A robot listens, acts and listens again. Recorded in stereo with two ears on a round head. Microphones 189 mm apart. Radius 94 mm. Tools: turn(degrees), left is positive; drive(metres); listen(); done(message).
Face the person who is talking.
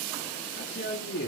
turn(degrees=50)
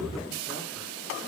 listen()
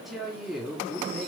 done("Found it: a woman speaking, straight ahead.")